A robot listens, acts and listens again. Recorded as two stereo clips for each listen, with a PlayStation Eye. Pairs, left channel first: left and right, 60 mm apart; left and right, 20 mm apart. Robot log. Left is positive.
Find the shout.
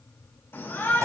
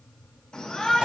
note: The shout: about 50° left or 130° left.
cmd yaw +50
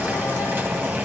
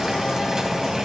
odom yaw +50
cmd idle
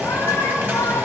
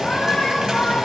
note: So it is at 75° left.
cmd yaw +75
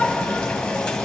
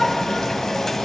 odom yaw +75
cmd idle
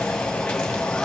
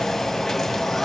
cmd idle
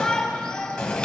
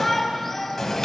note: The shout is now 10° left.
cmd yaw +10
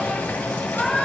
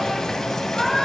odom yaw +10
end: Found it: a shout, straight ahead.